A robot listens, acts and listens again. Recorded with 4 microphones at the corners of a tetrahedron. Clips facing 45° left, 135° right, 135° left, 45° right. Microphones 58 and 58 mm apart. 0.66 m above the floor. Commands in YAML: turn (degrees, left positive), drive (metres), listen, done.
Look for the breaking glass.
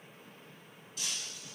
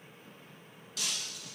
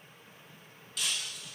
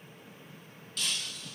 turn: -140
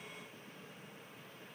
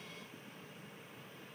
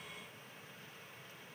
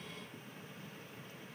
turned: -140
done: "Facing where the breaking glass came from. I can't hear it now."